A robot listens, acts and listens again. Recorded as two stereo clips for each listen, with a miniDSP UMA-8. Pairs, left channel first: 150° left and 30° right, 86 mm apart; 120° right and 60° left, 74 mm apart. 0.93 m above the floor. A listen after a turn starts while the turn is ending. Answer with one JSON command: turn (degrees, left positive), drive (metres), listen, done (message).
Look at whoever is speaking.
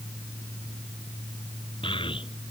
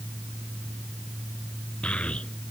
{"turn": 165}
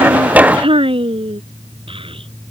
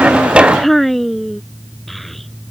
{"turn": -30}
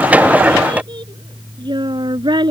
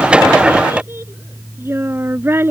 {"done": "Facing the child speaking."}